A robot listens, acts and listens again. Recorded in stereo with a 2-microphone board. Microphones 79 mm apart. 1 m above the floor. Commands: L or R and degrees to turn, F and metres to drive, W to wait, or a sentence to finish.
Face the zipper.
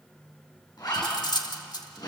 L60
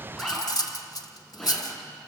Facing the zipper, over 4 m away.